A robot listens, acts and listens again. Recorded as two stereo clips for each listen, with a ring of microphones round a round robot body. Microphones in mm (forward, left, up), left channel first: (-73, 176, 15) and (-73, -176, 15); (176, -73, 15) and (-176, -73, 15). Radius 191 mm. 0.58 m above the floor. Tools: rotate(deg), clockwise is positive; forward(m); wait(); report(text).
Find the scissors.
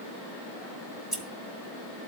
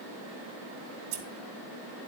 rotate(-180)
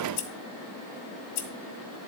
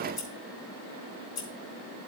rotate(-60)
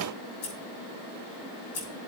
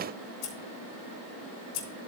report("Found it: scissors, straight ahead.")